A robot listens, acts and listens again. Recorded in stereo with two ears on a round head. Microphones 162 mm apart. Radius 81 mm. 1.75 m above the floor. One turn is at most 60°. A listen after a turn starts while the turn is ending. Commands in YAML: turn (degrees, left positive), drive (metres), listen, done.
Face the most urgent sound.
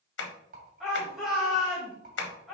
turn: 30
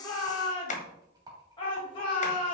turn: 60
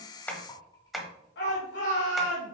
turn: 60
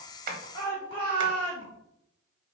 turn: 30
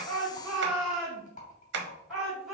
done: "Found it: a shout, straight ahead."